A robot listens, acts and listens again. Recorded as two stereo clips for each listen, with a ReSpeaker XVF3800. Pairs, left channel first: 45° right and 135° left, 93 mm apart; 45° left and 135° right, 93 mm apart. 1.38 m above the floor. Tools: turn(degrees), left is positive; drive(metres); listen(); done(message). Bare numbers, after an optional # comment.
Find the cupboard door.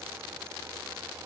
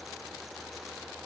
listen()
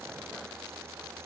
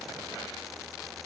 listen()
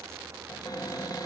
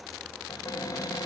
done("Found it: a cupboard door, straight ahead.")